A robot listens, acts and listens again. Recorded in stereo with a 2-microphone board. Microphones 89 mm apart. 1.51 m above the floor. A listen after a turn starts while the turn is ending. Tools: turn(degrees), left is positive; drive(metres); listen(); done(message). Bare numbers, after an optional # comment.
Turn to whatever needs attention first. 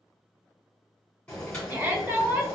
# The shout: about 25° right or 155° right.
turn(-25)
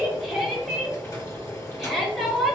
done("Facing the shout.")